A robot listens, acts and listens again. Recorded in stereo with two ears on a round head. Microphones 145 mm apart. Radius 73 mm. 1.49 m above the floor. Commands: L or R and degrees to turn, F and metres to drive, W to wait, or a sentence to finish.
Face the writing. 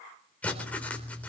L30
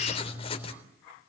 L145
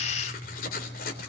L60
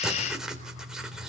Facing the writing.